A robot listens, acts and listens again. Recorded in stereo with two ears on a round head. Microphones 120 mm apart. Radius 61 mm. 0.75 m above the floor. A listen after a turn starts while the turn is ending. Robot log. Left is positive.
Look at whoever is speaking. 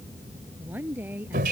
cmd yaw -30
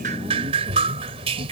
cmd idle
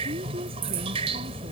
cmd idle
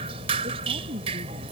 note: So it is at 135° right.
cmd yaw -135
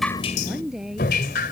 end: Found it: a woman speaking, straight ahead.